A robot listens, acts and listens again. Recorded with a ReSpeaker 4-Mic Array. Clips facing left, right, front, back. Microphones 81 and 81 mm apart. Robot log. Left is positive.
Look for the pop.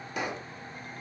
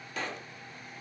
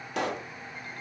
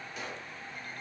note: The pop: 15° left.
cmd yaw +15
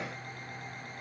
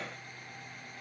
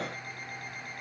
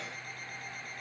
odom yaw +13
end: I heard a pop from this way, but can't make it out now.